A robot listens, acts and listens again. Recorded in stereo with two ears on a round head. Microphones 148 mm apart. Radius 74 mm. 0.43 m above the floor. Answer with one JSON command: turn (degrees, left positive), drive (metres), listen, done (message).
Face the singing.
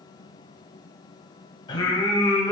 {"turn": 20}
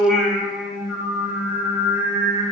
{"turn": -25}
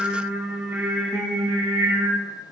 {"turn": -30}
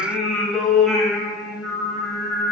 {"done": "Facing the singing."}